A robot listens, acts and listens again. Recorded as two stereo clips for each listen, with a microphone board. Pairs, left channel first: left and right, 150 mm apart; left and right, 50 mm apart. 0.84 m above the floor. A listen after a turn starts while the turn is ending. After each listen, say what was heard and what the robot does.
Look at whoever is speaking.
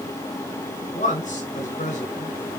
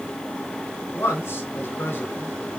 The man speaking: about 55° left or 125° left. Turn 55° left.
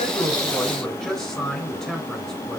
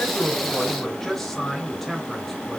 Found it: a man speaking, straight ahead.